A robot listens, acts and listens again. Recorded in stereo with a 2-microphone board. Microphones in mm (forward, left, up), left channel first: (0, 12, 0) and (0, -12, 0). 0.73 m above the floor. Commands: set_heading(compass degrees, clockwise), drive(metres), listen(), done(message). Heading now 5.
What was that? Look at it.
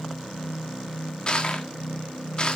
set_heading(330)
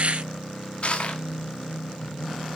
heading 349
set_heading(214)
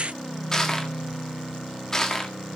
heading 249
set_heading(234)
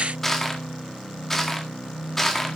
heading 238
done("Facing the crushing, 1 to 2 m away.")